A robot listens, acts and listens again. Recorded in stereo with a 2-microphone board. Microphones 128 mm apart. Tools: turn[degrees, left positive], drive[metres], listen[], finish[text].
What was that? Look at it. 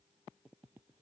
Action: listen[]
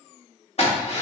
Thought: The drill: about 50° left or 130° left.
Action: turn[50]
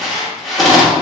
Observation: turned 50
Action: finish[Found it: a drill, straight ahead.]